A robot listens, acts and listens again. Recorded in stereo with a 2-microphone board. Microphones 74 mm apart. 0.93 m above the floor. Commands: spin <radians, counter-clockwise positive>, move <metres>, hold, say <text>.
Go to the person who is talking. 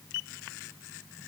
hold
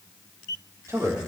spin -0.70
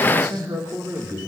spin -1.75
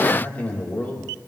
spin 0.44
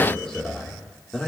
spin 0.17
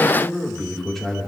move 1.0
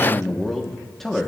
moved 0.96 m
move 1.0
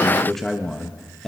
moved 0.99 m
move 1.0
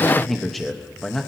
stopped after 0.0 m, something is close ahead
say Arrived at the man speaking, straight ahead.